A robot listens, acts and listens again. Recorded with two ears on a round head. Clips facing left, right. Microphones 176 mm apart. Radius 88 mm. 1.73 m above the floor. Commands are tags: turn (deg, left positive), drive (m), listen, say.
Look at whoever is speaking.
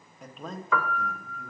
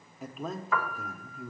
<turn deg="-30"/>
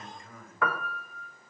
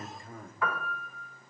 <turn deg="-145"/>
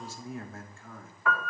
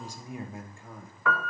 <turn deg="-15"/>
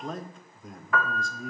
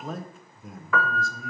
<say>Facing the man speaking, 1 to 2 m away.</say>